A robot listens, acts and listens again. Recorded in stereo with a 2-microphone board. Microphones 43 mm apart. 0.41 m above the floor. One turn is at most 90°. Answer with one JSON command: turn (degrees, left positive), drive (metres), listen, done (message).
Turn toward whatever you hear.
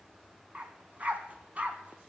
{"turn": -30}
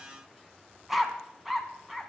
{"done": "Found it: a dog barking, straight ahead."}